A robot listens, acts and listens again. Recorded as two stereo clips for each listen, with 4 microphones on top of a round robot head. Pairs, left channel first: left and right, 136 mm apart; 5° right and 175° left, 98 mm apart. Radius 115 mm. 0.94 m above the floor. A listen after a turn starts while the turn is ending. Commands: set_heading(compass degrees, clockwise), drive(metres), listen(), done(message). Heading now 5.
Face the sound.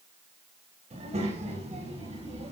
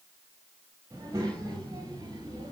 set_heading(130)
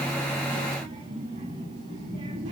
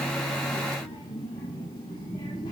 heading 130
set_heading(180)
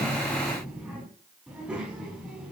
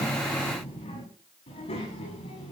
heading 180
done("Found it: a child speaking, straight ahead.")